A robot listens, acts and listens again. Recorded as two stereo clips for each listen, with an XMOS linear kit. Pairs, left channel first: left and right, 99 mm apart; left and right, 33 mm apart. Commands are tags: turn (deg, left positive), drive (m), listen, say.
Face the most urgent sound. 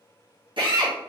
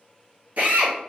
<listen/>
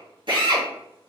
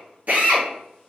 <listen/>
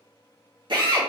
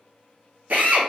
<say>I can't make out anything urgent, only a drill.</say>